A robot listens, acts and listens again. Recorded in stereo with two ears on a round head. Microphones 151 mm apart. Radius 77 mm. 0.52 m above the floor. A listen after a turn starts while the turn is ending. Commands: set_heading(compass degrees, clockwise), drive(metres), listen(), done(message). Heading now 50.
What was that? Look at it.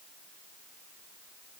listen()
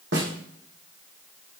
set_heading(140)
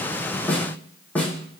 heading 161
set_heading(151)
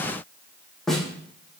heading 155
done("Found it: a snare drum, straight ahead.")